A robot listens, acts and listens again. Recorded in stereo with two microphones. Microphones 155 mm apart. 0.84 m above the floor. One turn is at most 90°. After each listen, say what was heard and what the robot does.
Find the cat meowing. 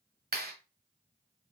Keep listening.
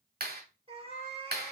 The cat meowing: about 40° right or 140° right. Turn 40° right.
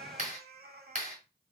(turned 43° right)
So it is at 100° right. Turn 90° right.
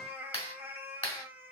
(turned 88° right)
The cat meowing is now 10° right. Turn 10° right.
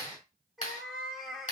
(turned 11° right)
Facing the cat meowing.